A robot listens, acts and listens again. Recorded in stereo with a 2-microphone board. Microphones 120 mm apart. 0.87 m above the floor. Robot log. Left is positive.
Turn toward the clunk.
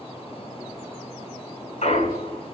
note: The clunk: about 75° left or 105° left.
cmd yaw +75
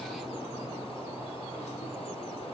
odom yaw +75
cmd idle
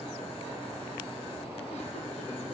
end: I heard a clunk, but can't make it out now. It was about straight ahead or 30° left.